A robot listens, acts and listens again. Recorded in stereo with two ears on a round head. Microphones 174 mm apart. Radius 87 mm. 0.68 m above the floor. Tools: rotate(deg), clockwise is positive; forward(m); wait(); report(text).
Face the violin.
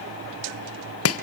wait()
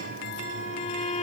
rotate(-35)
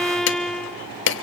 report("Facing the violin, under 1 m away.")